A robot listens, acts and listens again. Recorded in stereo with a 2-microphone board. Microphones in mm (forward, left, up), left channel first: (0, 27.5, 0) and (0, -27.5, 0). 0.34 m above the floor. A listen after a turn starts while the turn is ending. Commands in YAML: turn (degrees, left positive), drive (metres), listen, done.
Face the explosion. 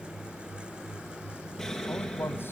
turn: 30
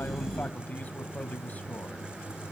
listen: true
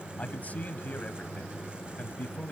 done: "I heard an explosion, but can't make it out now. It was about 20° right or 140° left."